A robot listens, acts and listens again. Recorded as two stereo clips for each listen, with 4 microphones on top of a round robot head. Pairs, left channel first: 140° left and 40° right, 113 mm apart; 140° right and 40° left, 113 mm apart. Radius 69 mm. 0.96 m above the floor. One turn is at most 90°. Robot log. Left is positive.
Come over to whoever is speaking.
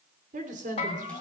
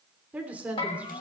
note: The woman speaking: 35° right.
cmd yaw -35
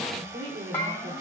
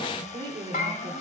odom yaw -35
cmd fwd 1.0
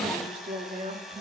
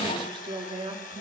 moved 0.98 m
note: The woman speaking is now 10° right.
cmd yaw -10
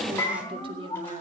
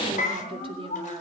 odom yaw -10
cmd idle
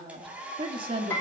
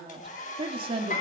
cmd fwd 1.0
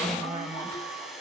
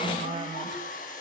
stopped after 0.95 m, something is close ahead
end: Arrived at the woman speaking, straight ahead.